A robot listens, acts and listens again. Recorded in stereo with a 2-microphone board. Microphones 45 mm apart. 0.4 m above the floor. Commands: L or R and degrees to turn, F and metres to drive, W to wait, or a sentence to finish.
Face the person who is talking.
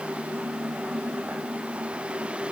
W
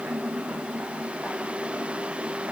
W
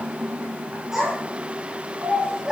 R30
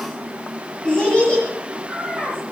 L20
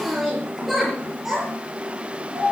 Facing the child speaking, over 4 m away.